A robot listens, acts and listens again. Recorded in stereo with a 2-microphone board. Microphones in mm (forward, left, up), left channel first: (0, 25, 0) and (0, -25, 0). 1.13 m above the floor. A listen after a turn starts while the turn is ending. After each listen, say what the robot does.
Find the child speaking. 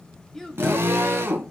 Turn 30° left.
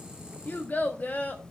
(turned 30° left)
Turn 140° left.
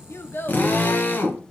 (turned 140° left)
Keep listening.
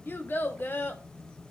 Turn 50° left.
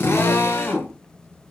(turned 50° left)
Keep listening.
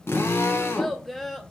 Facing the child speaking.